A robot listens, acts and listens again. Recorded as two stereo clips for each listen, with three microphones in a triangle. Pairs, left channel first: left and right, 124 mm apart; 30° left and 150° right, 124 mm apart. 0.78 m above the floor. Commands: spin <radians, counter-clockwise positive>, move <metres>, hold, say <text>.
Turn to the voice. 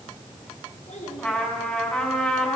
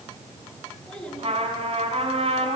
spin 2.01
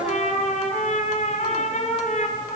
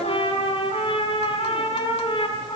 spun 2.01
hold
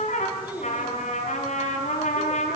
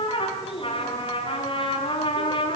spin -0.26
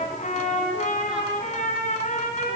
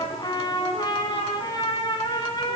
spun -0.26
hold
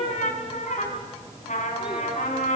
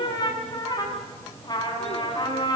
hold
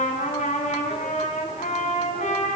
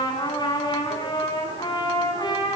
say I heard a child speaking from this way, but can't make it out now.